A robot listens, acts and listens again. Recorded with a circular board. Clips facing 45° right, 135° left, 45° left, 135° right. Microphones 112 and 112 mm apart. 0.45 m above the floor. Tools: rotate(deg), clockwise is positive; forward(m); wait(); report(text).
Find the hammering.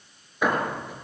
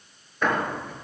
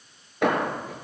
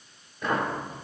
rotate(-35)
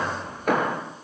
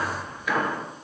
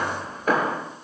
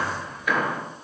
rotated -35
report("Facing the hammering, over 4 m away.")